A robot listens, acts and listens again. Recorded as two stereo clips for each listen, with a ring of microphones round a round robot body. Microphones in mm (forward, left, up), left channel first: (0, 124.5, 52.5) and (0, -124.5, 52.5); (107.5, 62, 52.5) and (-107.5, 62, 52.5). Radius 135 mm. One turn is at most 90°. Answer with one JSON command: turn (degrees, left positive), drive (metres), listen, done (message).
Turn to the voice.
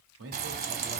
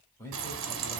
{"turn": -75}
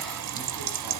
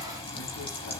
{"listen": true}
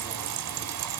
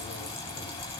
{"listen": true}
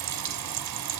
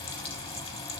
{"done": "I heard a man speaking from this way, but can't make it out now."}